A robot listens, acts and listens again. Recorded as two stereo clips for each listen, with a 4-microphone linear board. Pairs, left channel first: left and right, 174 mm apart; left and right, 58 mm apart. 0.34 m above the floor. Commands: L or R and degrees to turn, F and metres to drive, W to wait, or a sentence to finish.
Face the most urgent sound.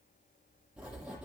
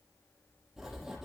W
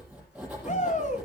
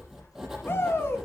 L45
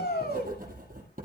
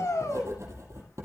L80
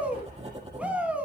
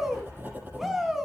R10
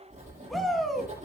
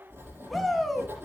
Found it: a shout, straight ahead.